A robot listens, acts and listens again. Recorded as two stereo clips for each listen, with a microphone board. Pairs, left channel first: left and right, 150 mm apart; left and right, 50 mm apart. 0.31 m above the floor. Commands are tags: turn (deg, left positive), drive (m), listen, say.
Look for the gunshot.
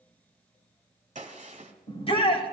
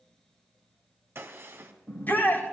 <turn deg="-50"/>
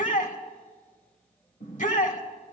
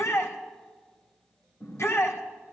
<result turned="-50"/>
<listen/>
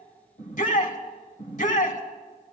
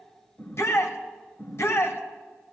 <say>I heard a gunshot, but can't make it out now. It was about straight ahead or 80° right.</say>